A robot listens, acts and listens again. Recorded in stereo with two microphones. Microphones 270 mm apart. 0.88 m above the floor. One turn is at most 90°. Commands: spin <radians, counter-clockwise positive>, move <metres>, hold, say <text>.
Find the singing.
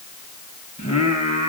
spin 0.35
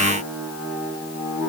spin -0.17
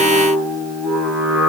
say Found it: singing, straight ahead, over 4 m away.